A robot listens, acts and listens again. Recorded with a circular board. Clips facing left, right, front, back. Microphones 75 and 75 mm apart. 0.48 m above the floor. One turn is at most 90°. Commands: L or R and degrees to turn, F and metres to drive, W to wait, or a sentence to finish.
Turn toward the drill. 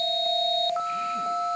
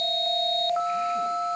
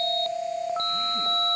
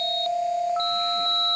W
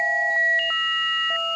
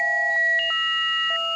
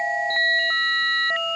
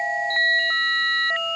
W
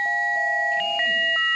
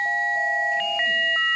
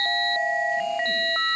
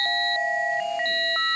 I can't make out a drill.